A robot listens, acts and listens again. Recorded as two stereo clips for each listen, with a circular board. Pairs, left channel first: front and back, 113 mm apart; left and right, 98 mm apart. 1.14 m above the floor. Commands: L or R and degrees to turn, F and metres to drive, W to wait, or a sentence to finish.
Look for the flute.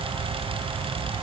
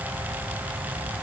W
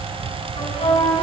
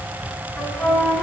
L10
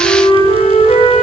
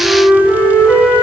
Found it: a flute, straight ahead, 1 to 2 m away.